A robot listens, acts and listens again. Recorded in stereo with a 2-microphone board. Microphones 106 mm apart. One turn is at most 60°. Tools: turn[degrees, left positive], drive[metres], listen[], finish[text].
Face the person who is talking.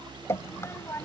Thought: The child speaking: about 20° left or 160° left.
Action: turn[20]
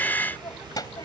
Thought: The child speaking: about 35° left or 145° left.
Action: turn[35]
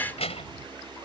Thought: So it is at 115° left.
Action: turn[60]
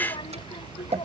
Thought: The child speaking is now 50° left.
Action: turn[50]
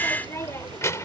Thought: The child speaking is now 25° left.
Action: turn[25]
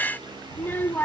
Thought: The child speaking is now 20° left.
Action: turn[20]
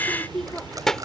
Action: finish[Found it: a child speaking, straight ahead.]